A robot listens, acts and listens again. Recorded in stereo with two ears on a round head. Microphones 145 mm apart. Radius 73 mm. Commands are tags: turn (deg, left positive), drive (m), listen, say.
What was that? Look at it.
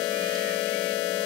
<listen/>
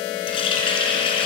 <turn deg="35"/>
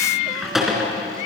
<say>Facing the running tap.</say>